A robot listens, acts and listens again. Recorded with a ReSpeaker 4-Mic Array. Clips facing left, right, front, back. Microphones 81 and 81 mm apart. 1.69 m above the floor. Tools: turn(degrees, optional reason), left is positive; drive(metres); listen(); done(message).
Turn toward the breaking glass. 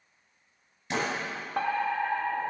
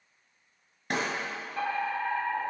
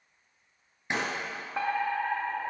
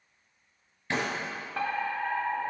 turn(degrees=-70, reason="The breaking glass: 70° right.")
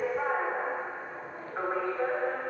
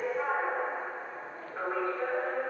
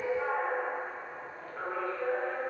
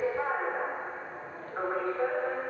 done("Facing where the breaking glass came from. I can't hear it now.")